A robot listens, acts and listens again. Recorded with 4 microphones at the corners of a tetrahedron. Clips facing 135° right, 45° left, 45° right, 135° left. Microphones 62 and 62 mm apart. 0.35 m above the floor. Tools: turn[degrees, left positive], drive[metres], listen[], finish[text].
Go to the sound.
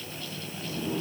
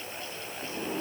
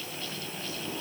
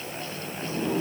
Thought: The sliding door: 100° left.
Action: turn[100]
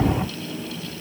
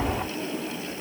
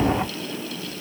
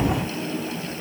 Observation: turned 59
Thought: The sliding door is now 40° left.
Action: turn[40]
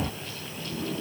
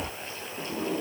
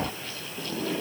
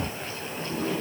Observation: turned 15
Thought: The sliding door is now 25° left.
Action: turn[25]
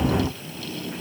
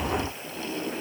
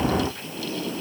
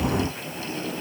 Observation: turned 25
Action: drive[1.0]
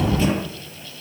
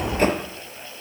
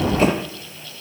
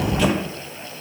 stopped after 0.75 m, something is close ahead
Action: finish[Something is in my way. I am facing the sliding door but have not reached it.]